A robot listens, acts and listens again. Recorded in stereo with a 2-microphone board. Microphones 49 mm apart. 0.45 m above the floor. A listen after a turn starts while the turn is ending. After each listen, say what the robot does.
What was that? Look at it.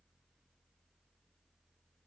Keep listening.
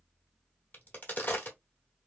Turn 40° left.
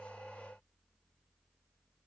Keep listening.
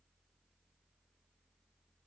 I heard a crack, but can't make it out now. It was about straight ahead or 100° left.